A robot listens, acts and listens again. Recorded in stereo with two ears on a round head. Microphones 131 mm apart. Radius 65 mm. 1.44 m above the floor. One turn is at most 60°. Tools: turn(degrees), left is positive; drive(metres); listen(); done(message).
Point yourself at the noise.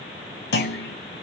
turn(degrees=60)
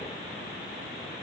turn(degrees=30)
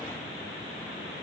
done("I heard a clunk from this way, but can't make it out now.")